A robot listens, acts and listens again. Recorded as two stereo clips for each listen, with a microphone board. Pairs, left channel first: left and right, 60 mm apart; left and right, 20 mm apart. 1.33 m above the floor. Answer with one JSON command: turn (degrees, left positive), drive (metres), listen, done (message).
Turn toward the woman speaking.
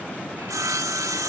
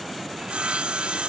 {"listen": true}
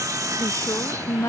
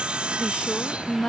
{"turn": 50}
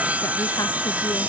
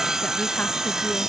{"listen": true}
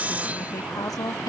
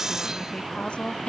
{"turn": 80}
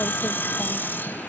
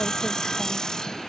{"listen": true}
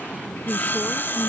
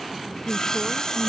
{"turn": 15}
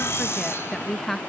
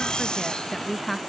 {"done": "Facing the woman speaking."}